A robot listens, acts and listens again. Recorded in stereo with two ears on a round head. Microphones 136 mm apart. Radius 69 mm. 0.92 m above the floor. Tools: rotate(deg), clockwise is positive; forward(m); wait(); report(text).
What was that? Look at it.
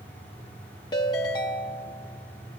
rotate(-30)
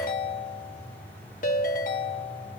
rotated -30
rotate(-120)
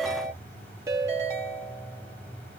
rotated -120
rotate(25)
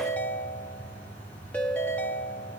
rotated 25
rotate(-10)
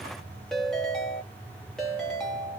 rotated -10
report("Facing the ringtone, 1 to 2 m away.")